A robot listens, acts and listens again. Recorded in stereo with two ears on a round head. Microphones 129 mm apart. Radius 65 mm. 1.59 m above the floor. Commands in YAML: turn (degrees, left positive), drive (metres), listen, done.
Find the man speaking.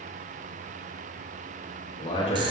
turn: 40
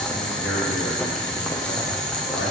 listen: true
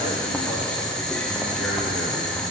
listen: true
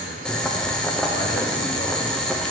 done: "I heard a man speaking, but can't make it out now. It was about straight ahead or 100° left."